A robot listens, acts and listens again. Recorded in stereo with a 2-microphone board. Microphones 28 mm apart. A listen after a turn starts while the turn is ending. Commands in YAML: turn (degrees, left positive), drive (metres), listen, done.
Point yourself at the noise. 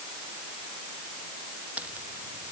turn: -55
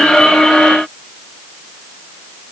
listen: true
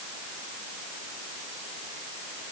done: "I heard a crack, but can't make it out now. It was about straight ahead or 70° right."